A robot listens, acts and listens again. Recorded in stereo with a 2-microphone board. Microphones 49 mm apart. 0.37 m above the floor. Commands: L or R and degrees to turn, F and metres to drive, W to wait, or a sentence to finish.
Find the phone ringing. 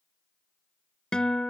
W
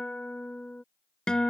W
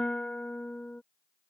I can't make out a phone ringing, only a guitar.